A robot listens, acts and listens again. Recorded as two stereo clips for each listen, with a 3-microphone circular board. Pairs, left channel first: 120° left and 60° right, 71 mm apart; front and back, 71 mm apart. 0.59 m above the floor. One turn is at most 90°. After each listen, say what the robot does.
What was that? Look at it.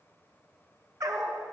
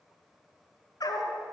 Turn 20° right.
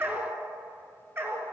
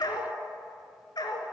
Found it: a dog barking, straight ahead.